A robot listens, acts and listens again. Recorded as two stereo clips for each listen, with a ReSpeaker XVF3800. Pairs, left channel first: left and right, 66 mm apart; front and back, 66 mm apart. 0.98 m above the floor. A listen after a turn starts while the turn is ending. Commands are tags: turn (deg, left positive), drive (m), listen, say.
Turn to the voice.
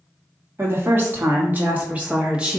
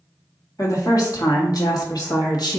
<turn deg="-15"/>
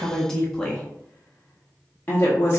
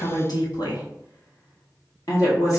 <turn deg="35"/>
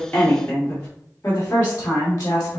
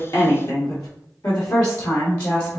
<turn deg="35"/>
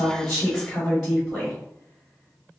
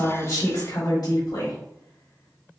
<say>Found it: a woman speaking, straight ahead.</say>